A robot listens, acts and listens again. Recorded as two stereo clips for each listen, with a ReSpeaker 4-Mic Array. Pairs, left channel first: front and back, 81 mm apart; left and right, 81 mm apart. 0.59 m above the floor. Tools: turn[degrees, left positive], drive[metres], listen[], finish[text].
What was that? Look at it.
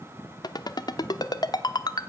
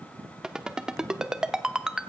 Thought: The ringtone: 10° right.
Action: turn[-10]
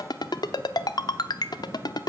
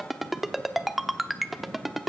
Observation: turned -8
Action: finish[Facing the ringtone, under 1 m away.]